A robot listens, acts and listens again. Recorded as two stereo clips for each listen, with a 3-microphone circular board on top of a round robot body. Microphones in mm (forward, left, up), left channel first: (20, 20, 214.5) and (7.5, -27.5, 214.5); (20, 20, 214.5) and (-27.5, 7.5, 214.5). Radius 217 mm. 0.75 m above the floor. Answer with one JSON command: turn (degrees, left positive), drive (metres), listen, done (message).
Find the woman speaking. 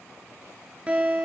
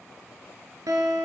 {"listen": true}
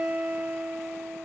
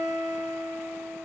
{"listen": true}
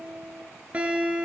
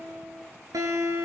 {"done": "I can't make out a woman speaking, only a guitar."}